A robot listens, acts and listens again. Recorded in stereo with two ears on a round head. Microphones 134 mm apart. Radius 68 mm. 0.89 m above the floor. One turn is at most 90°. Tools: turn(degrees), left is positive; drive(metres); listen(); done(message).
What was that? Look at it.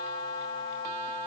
listen()
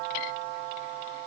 listen()
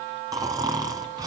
turn(degrees=-25)
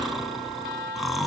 done("Found it: snoring, straight ahead, 2 to 4 m away.")